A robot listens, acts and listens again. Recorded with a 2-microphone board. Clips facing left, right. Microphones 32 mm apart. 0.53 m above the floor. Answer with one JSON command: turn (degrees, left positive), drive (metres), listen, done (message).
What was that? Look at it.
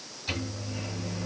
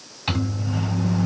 {"turn": -70}
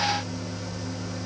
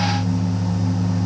{"turn": -35}
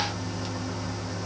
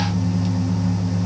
{"done": "Facing the microwave."}